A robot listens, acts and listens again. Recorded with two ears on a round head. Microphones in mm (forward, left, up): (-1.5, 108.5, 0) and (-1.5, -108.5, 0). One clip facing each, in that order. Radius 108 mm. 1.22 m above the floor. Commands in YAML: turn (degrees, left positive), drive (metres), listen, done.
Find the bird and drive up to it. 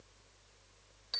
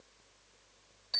listen: true
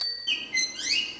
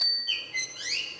turn: 65
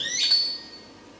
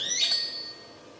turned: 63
turn: 50
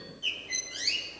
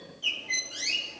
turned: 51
drive: 1.0
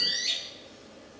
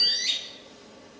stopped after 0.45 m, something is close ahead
done: "Something is in my way. I am facing the bird but have not reached it."